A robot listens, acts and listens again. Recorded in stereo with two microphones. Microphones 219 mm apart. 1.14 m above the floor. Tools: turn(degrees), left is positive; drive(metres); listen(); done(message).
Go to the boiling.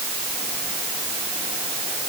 listen()
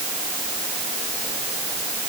listen()
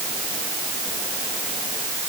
done("I can't make out boiling to turn to.")